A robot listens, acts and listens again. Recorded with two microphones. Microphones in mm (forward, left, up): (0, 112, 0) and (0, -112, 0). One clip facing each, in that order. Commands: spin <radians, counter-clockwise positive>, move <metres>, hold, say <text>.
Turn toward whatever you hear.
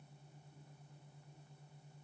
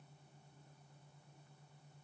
hold
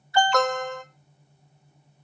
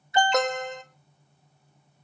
spin -0.35
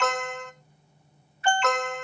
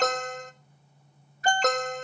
spin -2.44
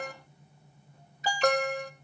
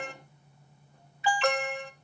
spin 0.70
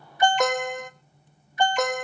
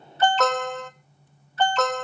spin 0.26
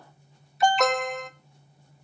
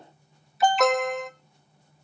say Found it: an alarm, straight ahead.